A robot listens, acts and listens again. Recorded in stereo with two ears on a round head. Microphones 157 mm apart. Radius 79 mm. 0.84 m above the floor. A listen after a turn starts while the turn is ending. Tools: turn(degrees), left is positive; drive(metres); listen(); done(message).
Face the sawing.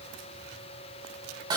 listen()
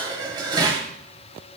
listen()
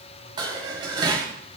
done("I can't make out sawing, only dishes clattering.")